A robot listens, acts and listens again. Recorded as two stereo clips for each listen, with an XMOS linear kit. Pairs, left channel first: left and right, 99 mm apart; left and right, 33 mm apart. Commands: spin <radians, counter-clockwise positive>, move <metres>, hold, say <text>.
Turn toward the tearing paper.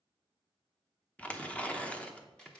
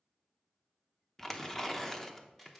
spin 0.52
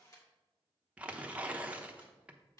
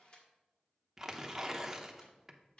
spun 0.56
spin -0.26
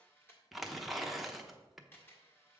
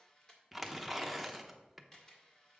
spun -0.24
say Facing the tearing paper.